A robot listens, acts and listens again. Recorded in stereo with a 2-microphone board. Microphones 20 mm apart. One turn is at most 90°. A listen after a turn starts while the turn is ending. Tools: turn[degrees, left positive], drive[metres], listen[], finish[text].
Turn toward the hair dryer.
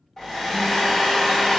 Thought: The hair dryer: about 25° left or 155° left.
Action: turn[25]
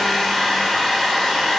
Thought: So it is at 130° left.
Action: turn[90]
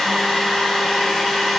Thought: The hair dryer is now 55° left.
Action: turn[55]
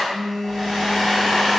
Action: finish[Found it: a hair dryer, straight ahead.]